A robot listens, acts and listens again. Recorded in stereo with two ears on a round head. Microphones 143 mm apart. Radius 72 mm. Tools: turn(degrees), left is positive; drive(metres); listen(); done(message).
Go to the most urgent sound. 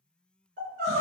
turn(degrees=-60)
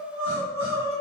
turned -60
turn(degrees=-15)
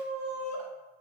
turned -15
drive(metres=1.0)
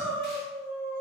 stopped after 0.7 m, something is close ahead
done("I am next to the crying.")